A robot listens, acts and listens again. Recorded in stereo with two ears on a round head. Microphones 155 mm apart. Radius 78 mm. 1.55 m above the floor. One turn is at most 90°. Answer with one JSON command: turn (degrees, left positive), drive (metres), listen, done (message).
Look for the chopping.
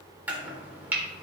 {"turn": -30}
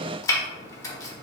{"turn": 20}
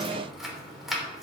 {"done": "Found it: chopping, straight ahead."}